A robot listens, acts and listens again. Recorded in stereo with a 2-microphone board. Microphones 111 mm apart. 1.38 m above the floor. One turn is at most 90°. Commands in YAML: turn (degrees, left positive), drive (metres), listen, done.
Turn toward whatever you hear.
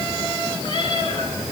turn: 50
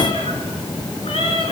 turn: 65
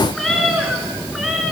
done: "Facing the cat meowing."